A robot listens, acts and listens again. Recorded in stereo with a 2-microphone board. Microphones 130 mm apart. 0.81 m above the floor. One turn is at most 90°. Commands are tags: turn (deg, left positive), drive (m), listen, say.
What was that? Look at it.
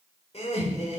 <turn deg="60"/>
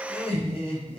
<turn deg="45"/>
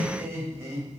<turn deg="-20"/>
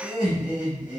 <turn deg="-10"/>
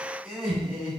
<say>Facing the laughter.</say>